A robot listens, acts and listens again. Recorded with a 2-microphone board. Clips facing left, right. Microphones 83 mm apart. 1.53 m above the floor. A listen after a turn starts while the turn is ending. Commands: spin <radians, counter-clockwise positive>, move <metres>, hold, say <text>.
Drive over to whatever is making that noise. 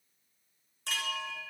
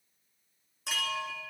spin -0.52
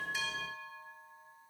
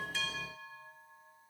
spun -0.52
spin 0.35
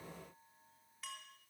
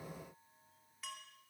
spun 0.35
move 1.0
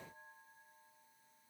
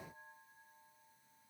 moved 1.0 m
hold
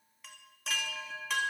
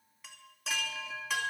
move 1.0
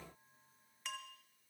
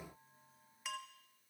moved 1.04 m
move 1.0
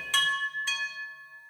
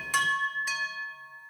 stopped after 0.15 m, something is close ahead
spin -0.17
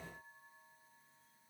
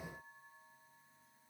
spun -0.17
hold
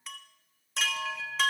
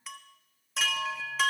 say I am next to the chime.